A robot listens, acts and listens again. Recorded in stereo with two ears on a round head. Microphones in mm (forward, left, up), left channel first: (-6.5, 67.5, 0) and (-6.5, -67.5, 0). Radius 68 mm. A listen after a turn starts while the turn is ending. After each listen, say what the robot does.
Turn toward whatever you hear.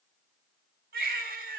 Turn 70° right.
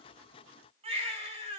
Turn 40° right.
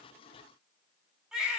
Facing the baby crying.